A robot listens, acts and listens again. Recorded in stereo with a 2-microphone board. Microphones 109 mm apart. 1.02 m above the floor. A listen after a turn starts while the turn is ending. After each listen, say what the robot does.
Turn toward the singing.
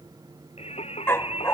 Turn 90° left.
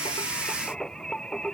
Found it: singing, straight ahead.